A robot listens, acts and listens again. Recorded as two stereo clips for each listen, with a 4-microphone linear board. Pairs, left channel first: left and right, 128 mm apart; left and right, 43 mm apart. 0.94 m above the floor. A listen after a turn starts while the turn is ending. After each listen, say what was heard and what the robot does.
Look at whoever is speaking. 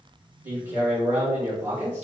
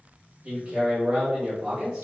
The man speaking: about 15° right or 165° right. Turn 15° right.
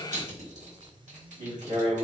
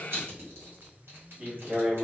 So it is at 150° right. Turn 150° right.
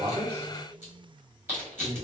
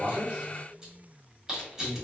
The man speaking is now 60° right. Turn 60° right.
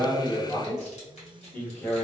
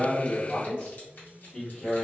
The man speaking is now 10° left. Turn 10° left.
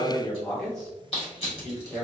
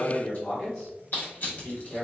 Facing the man speaking, 1 to 2 m away.